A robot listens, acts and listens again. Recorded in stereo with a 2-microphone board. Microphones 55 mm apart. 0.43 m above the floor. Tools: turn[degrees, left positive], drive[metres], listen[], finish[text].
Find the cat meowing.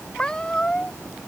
Action: turn[30]
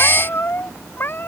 Thought: So it is at 140° left.
Action: turn[140]
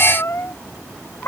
Thought: The cat meowing is now 50° left.
Action: turn[50]
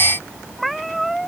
Action: finish[Facing the cat meowing.]